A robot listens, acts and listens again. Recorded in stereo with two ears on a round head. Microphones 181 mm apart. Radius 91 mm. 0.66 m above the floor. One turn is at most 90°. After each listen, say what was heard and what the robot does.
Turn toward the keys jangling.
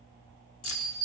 Turn 90° left.
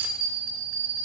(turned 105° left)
Nothing new. It was at 15° right. Turn 15° right.
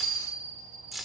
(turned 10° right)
Found it: keys jangling, straight ahead, 1 to 2 m away.